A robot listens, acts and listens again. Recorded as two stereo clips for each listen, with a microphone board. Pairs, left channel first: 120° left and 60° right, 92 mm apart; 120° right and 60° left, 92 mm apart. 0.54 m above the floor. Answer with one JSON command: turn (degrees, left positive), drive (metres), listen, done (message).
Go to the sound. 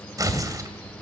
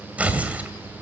{"turn": -15}
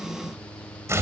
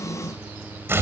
{"drive": 1.0}
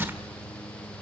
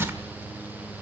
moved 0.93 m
{"drive": 1.0}
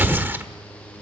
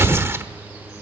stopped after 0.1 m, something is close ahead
{"done": "I am next to the tearing paper."}